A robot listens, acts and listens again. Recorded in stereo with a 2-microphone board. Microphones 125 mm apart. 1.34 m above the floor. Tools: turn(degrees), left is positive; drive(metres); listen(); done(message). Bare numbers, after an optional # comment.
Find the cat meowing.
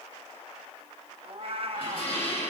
# The cat meowing: about 50° right or 130° right.
turn(-50)
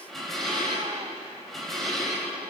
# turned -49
listen()
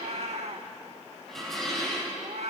# So it is at 70° right.
turn(-70)
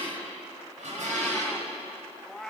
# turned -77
done("Facing the cat meowing.")